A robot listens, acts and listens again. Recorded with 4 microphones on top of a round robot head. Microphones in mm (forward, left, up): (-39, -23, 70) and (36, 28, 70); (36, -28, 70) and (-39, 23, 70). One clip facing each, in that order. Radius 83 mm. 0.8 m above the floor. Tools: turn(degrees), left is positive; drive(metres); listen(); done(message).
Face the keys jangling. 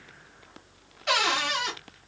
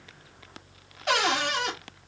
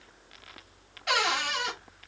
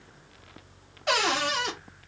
listen()
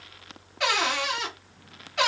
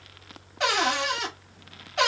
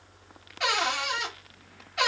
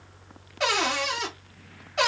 listen()
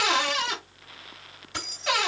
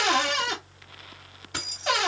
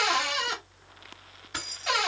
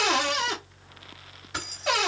turn(degrees=55)
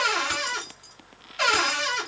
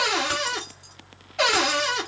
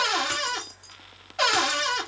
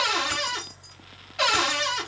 listen()
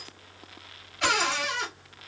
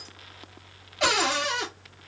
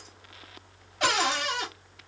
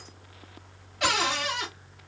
listen()
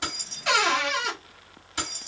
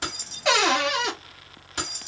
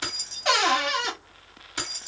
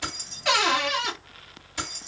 turn(degrees=-10)
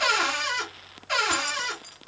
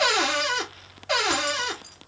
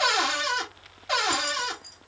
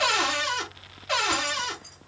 listen()
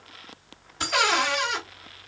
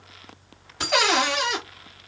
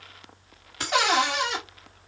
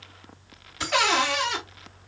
done("Found it: keys jangling, straight ahead.")